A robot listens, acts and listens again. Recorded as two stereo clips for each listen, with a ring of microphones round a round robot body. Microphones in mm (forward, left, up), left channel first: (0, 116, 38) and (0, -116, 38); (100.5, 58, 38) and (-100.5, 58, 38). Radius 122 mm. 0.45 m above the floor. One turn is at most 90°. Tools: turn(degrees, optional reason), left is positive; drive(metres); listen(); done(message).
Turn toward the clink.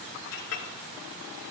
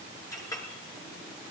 turn(degrees=75, reason="The clink: 75° left.")
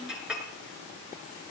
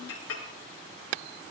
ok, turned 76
done("Found it: a clink, straight ahead, over 4 m away.")